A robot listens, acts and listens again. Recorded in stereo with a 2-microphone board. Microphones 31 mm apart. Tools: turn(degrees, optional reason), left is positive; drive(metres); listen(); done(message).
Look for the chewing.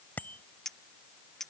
listen()
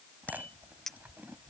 turn(degrees=-70, reason="The chewing: about 70° right or 110° right.")
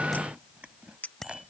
turn(degrees=-40, reason="So it is at 40° right.")
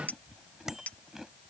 turn(degrees=-15, reason="The chewing is now 15° right.")
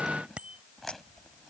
done("Found it: chewing, straight ahead.")